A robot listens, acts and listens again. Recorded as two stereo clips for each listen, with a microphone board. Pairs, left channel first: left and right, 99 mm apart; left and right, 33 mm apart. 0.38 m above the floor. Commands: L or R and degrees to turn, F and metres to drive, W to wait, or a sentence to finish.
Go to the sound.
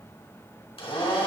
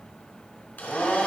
L70
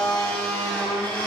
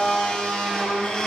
L15
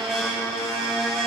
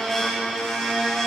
F1.0
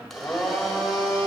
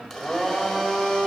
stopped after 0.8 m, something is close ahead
Arrived at the blender, straight ahead.